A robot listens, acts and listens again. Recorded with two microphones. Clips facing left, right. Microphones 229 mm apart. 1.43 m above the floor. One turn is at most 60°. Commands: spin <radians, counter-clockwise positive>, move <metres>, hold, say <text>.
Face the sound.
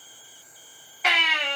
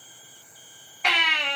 spin 0.52
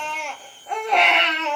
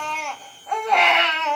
spin 1.05
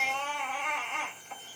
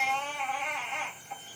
spin 1.05
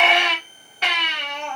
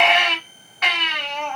spin 0.61
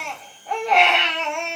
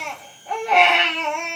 say Facing the baby crying.